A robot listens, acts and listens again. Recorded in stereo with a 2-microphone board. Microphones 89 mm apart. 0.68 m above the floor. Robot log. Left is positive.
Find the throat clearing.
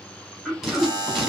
cmd yaw +30
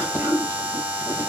note: So it is at 20° right.
cmd yaw -20
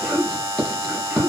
end: Found it: throat clearing, straight ahead.